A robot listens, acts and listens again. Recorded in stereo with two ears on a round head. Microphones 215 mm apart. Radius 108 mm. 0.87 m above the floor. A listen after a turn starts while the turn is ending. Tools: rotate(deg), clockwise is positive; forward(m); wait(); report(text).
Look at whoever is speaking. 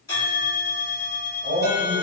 rotate(20)
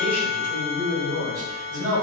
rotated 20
rotate(145)
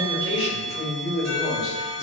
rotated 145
report("Facing the man speaking.")